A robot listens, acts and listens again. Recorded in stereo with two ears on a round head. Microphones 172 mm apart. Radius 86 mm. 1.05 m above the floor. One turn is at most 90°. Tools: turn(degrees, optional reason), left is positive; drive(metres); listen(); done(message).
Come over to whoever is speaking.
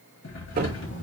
turn(degrees=65, reason="The child speaking: about 65° left or 115° left.")
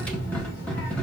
turn(degrees=45, reason="So it is at 45° left.")
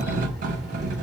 drive(metres=1.0)
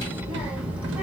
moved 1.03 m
turn(degrees=-10, reason="The child speaking is now 10° right.")
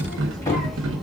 drive(metres=1.0)
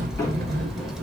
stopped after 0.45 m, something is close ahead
done("I am next to the child speaking.")